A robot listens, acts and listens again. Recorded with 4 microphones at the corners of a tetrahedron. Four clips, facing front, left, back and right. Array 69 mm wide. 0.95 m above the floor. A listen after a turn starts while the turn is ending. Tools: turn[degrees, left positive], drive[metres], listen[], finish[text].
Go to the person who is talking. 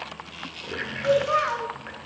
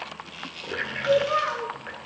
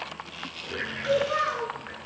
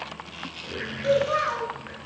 Thought: The child speaking: 30° right.
Action: turn[-30]
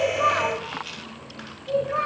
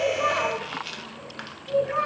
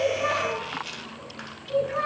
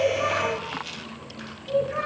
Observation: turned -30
Action: drive[1.0]
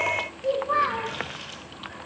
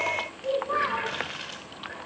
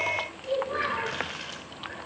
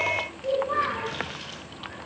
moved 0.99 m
Action: drive[1.0]
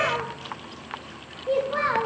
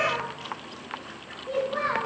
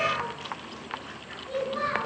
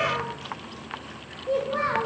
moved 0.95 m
Thought: The child speaking is now 15° right.
Action: turn[-15]
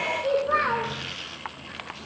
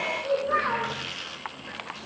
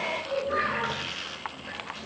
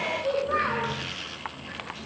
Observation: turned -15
Action: drive[1.0]
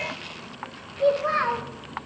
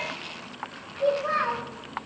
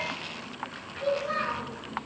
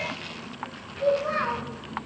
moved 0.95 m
Action: drive[1.0]
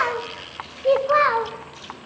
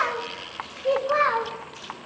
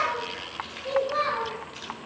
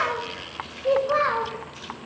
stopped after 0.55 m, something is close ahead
Action: finish[I am next to the child speaking.]